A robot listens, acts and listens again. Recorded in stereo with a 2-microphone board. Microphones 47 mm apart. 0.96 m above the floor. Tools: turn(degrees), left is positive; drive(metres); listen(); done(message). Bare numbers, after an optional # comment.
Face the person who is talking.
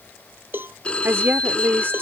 # The woman speaking: about 55° right or 125° right.
turn(-55)
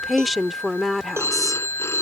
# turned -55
done("Facing the woman speaking.")